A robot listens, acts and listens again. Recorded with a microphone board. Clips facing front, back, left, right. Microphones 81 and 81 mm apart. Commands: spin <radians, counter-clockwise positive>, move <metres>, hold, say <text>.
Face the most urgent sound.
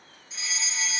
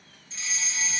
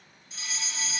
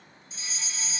spin 1.40
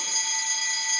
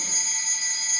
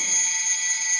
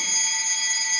say Found it: a fire alarm, straight ahead.